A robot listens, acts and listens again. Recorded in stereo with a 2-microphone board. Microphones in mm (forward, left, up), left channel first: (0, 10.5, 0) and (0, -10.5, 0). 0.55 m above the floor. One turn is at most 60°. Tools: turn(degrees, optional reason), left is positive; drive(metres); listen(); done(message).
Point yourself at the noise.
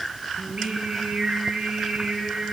turn(degrees=-60)
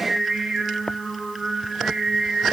turn(degrees=-45, reason="So it is at 45° right.")
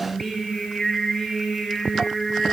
turn(degrees=10, reason="The singing is now 10° left.")
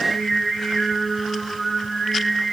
done("Facing the singing, over 4 m away.")